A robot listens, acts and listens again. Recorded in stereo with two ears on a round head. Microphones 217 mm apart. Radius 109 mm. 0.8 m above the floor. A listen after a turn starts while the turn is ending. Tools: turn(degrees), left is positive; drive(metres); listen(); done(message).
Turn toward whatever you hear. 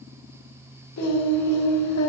turn(degrees=60)
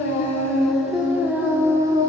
turn(degrees=-20)
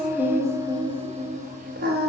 turn(degrees=-40)
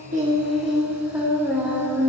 done("Found it: singing, straight ahead.")